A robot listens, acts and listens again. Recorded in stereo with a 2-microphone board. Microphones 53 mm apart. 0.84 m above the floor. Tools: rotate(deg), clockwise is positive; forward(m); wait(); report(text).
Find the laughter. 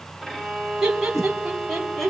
rotate(-30)
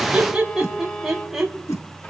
rotate(30)
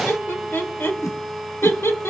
rotate(-55)
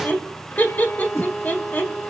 rotate(-35)
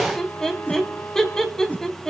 rotate(-10)
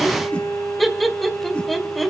report("Facing the laughter.")